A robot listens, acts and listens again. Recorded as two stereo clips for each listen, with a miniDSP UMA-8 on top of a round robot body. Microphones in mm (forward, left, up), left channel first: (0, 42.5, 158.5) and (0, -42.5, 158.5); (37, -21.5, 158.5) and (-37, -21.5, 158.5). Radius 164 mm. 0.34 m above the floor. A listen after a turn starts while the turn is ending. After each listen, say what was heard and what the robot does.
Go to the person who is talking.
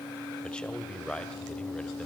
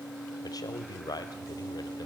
The man speaking: 15° left. Turn 15° left.
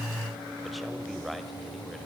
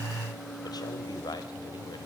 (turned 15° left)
Drive 1.0 m forward.
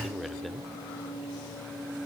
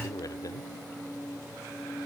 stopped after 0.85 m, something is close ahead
Arrived at the man speaking, straight ahead.